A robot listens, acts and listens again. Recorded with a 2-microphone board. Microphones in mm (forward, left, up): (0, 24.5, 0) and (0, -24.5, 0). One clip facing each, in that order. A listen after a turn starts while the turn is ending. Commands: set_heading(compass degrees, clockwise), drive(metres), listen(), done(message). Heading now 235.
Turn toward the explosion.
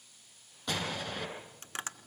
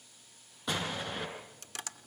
set_heading(265)
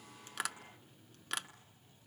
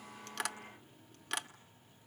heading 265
listen()
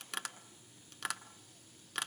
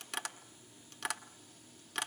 done("I heard an explosion, but can't make it out now. It was about 20° left or 140° right.")